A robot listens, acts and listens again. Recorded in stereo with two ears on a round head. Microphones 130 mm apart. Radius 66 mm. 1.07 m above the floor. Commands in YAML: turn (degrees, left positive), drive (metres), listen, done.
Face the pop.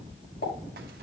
turn: 65
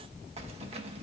listen: true
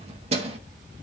done: "I heard a pop, but can't make it out now. It was about straight ahead or 50° left."